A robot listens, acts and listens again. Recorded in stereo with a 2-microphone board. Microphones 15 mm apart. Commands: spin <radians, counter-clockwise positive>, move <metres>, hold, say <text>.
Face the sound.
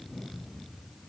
hold
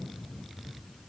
hold
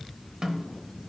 spin -0.96
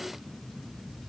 hold
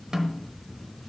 spin -0.96
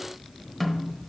say Facing the snare drum, under 1 m away.